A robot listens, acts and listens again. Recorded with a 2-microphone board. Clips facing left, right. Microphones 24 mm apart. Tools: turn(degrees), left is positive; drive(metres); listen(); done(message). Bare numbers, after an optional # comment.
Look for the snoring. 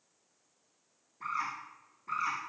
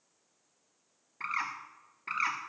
listen()
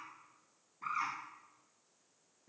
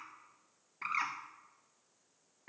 listen()
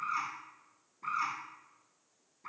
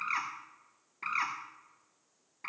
done("I can't make out snoring, only a bird.")